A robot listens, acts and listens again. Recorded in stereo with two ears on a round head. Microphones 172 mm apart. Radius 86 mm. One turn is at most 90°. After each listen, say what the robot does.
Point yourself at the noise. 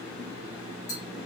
Turn 50° left.
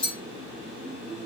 Found it: tapping, straight ahead, over 4 m away.